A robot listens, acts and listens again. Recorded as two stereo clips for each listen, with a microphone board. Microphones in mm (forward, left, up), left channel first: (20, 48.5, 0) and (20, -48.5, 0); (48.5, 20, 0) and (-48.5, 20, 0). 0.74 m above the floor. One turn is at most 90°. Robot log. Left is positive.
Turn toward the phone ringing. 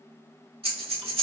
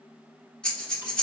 cmd idle
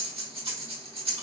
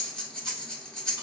cmd idle
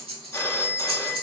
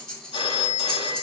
note: The phone ringing: 25° left.
cmd yaw +25
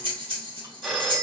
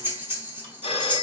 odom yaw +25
end: Facing the phone ringing, under 1 m away.